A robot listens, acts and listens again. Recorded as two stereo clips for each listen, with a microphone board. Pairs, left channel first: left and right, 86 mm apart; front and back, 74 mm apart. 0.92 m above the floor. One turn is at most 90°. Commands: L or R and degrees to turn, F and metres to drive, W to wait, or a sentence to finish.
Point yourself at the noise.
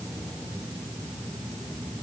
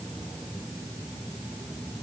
W
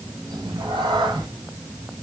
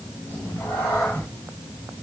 R65
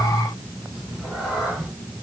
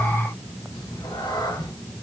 Found it: a cat meowing, straight ahead, over 4 m away.